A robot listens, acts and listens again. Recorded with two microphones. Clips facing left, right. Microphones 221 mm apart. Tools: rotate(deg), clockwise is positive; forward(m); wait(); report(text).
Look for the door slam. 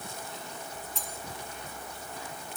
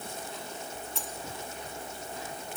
wait()
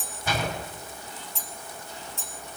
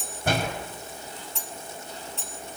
rotate(55)
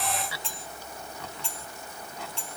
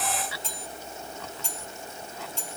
wait()
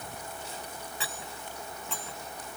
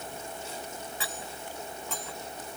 report("I heard a door slam, but can't make it out now. It was about straight ahead or 70° right.")